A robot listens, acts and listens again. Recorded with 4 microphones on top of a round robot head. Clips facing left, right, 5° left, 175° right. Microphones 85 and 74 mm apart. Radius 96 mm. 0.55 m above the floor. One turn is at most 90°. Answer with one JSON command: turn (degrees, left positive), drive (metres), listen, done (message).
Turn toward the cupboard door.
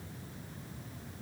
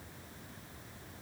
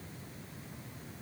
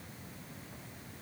{"listen": true}
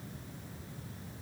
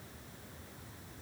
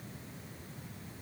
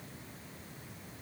{"listen": true}
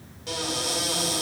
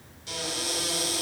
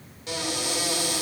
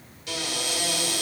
{"turn": 65}
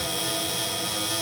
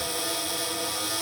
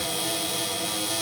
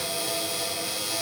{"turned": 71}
{"turn": -10}
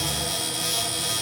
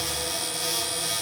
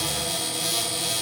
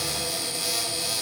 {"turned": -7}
{"done": "Found it: a cupboard door, straight ahead, 2 to 4 m away."}